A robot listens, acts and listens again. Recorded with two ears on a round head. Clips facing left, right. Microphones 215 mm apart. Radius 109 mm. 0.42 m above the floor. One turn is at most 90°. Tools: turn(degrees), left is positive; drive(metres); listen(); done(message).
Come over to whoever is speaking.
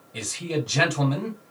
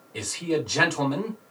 turn(degrees=20)
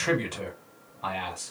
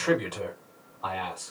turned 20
turn(degrees=90)
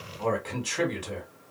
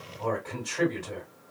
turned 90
turn(degrees=45)
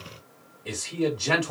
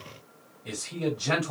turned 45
drive(metres=1.0)
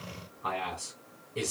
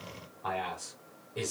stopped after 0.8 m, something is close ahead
done("Arrived at the man speaking, straight ahead.")